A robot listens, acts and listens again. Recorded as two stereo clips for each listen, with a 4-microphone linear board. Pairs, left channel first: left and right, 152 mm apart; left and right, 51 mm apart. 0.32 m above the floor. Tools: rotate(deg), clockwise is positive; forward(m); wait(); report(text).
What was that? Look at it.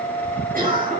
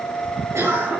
rotate(65)
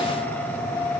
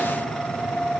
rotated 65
wait()
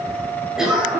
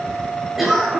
report("Found it: a cough, straight ahead.")